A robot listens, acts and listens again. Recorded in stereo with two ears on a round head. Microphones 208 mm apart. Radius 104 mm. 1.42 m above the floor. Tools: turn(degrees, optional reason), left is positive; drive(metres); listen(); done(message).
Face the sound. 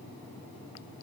listen()
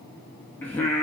turn(degrees=30)
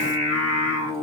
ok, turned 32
turn(degrees=-20, reason="So it is at 20° right.")
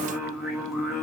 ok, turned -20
done("Found it: singing, straight ahead.")